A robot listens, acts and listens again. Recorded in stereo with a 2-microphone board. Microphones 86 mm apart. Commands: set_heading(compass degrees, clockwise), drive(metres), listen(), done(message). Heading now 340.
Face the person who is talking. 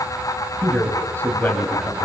set_heading(315)
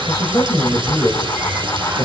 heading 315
set_heading(190)
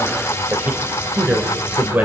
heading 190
set_heading(210)
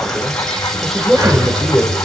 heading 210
done("Found it: a man speaking, straight ahead, 2 to 4 m away.")